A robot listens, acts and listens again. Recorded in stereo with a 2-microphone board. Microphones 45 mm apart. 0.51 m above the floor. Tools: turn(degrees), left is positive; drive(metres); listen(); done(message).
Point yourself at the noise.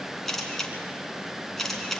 turn(degrees=30)
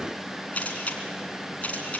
turn(degrees=145)
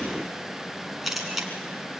done("Facing the camera shutter, 2 to 4 m away.")